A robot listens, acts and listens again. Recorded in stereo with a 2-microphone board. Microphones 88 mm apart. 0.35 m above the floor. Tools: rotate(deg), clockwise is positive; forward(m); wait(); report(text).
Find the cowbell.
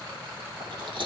wait()
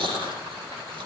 wait()
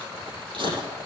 report("I can't make out a cowbell, only chewing.")